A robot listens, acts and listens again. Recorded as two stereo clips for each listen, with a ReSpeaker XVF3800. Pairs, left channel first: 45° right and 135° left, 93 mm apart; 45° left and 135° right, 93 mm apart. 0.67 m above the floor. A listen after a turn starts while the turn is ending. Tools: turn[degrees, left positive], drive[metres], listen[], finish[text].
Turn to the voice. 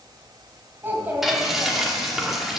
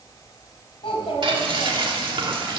Thought: The child speaking: 65° left.
Action: turn[65]
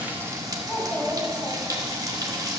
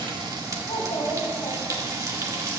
Thought: The child speaking is now 20° left.
Action: turn[20]
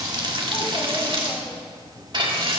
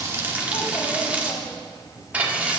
Action: listen[]
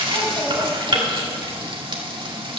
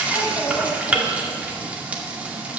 Action: listen[]
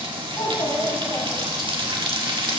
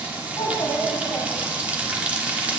Action: finish[Facing the child speaking.]